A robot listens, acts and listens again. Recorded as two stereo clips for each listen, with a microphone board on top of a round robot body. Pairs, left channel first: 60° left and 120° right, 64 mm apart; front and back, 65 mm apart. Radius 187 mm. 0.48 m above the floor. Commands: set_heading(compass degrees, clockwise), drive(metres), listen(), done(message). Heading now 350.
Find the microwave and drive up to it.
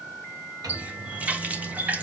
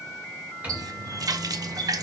set_heading(105)
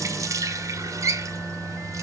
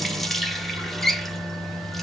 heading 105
set_heading(120)
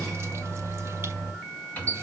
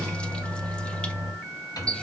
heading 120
drive(1.0)
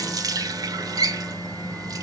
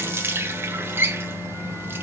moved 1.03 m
drive(1.0)
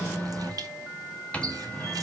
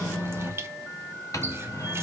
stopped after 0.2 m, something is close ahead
done("I am next to the microwave.")